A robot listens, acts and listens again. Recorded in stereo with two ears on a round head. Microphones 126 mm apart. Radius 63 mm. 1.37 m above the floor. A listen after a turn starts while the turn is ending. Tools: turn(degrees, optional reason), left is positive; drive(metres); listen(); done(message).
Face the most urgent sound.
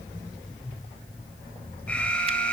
turn(degrees=30)
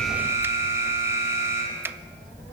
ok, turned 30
turn(degrees=-20, reason="So it is at 20° right.")
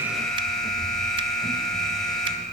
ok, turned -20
done("Found it: an alarm, straight ahead, over 4 m away.")